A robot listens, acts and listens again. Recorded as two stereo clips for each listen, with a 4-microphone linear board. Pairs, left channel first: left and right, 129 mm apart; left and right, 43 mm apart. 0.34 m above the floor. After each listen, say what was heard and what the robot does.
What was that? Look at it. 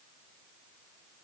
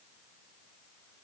Keep listening.
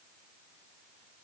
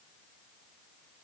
Keep listening.
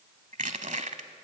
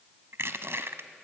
The crushing: about 70° right or 110° right. Turn 70° right.
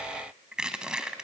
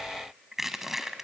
Found it: crushing, straight ahead.